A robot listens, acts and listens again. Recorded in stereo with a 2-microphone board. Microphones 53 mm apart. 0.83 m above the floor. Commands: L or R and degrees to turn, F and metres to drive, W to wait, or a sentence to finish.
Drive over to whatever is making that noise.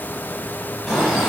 L30
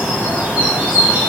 R30
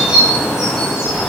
R10
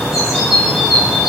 F1.0
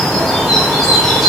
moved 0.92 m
F1.0
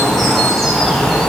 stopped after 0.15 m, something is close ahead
I am next to the bird.